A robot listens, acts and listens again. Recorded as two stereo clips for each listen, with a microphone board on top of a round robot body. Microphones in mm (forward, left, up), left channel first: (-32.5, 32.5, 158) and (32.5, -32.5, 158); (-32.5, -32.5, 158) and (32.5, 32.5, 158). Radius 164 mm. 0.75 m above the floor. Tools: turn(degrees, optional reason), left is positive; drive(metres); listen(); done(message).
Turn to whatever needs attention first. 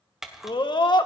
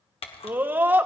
turn(degrees=110, reason="The scream: 110° left.")
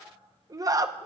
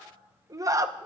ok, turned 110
done("Found it: a scream, straight ahead, 1 to 2 m away.")